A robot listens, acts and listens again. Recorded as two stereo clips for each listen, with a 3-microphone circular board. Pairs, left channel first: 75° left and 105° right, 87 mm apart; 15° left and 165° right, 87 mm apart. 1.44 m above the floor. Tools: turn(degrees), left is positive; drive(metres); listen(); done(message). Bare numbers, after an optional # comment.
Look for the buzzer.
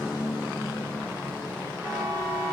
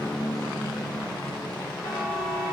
# The buzzer: 65° right.
turn(-65)
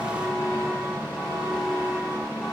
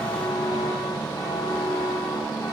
# The buzzer is now 25° right.
turn(-25)
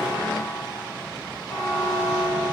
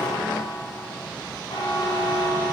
# The buzzer is now 15° right.
turn(-15)
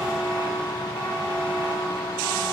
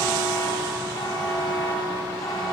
done("Found it: a buzzer, straight ahead.")